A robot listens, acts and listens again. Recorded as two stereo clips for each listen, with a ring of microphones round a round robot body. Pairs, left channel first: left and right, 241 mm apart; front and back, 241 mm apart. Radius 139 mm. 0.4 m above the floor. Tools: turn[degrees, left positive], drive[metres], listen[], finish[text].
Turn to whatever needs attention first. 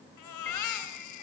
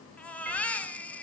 Thought: The baby crying: 85° left.
Action: turn[85]
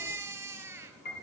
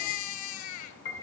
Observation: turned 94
Thought: The baby crying is now 10° right.
Action: turn[-10]
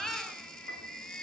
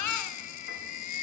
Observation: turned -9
Action: finish[Found it: a baby crying, straight ahead, 2 to 4 m away.]